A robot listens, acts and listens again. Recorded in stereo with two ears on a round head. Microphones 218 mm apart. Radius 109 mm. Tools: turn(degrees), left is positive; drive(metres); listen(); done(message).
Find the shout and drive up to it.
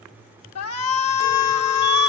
turn(degrees=70)
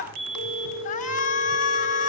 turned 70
turn(degrees=35)
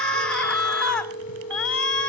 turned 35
drive(metres=1.0)
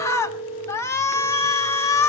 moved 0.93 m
turn(degrees=10)
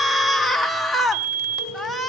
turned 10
drive(metres=1.0)
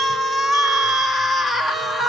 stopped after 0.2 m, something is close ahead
done("I am next to the shout.")